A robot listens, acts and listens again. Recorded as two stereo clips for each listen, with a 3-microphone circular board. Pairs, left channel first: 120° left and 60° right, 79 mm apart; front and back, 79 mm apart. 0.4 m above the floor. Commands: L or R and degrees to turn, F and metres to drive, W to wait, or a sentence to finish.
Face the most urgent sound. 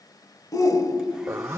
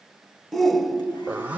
L85
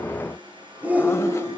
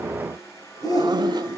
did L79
L10
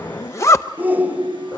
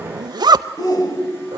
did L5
Found it: a shout, straight ahead.